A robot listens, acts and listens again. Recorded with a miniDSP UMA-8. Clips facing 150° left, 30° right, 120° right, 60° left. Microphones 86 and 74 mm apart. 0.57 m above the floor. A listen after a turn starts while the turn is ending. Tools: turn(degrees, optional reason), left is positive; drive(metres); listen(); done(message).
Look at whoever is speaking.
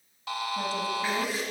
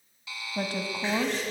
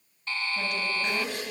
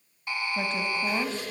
done("Facing the woman speaking, 2 to 4 m away.")